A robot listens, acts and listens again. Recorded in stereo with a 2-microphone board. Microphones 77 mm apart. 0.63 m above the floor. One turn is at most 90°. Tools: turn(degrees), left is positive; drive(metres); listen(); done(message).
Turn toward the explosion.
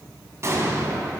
turn(degrees=-40)
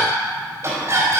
listen()
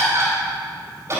done("I heard an explosion, but can't make it out now. It was about straight ahead or 100° right.")